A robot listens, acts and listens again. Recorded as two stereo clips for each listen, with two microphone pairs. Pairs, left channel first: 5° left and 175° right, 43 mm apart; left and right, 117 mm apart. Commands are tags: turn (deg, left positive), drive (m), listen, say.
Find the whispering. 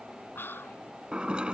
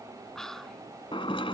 <say>Facing the whispering.</say>